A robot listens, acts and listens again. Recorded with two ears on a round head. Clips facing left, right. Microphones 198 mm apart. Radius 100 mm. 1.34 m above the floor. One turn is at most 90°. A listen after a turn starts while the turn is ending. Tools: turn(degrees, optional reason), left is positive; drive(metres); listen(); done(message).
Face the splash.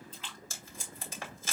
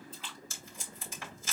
turn(degrees=65, reason="The splash: about 65° left or 115° left.")
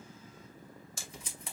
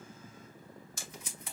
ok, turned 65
listen()
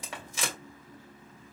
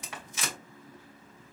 done("I heard a splash, but can't make it out now. It was about straight ahead or 50° left.")